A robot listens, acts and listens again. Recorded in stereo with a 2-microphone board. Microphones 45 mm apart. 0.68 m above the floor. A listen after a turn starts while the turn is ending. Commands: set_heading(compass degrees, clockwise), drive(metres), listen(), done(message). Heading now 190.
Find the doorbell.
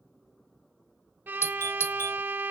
set_heading(120)
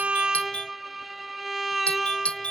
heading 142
set_heading(112)
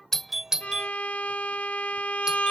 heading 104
set_heading(114)
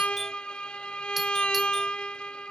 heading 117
listen()
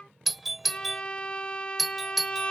done("Found it: a doorbell, straight ahead.")